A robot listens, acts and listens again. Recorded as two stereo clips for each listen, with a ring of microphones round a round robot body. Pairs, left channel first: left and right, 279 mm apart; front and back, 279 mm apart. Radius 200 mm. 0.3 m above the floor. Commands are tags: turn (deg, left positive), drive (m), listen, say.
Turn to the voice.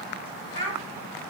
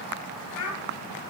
<turn deg="-40"/>
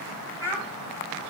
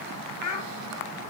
<turn deg="-10"/>
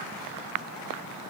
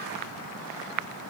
<listen/>
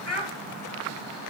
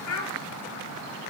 <say>Facing the child speaking.</say>